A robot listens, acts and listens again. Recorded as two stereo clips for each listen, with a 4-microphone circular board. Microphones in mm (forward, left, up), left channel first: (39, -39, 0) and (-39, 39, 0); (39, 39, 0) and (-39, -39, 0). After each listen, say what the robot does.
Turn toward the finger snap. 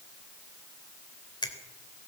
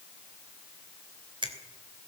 Turn 90° right.
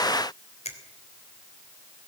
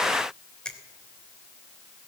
Turn 35° right.
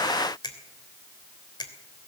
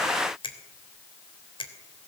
Found it: a finger snap, straight ahead, 2 to 4 m away.